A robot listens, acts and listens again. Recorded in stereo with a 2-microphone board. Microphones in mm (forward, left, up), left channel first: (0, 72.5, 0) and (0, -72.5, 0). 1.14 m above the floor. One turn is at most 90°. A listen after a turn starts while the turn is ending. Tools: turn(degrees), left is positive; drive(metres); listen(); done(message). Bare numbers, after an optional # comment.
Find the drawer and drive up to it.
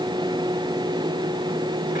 listen()
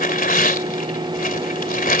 listen()
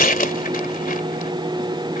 done("I can't make out a drawer to turn to.")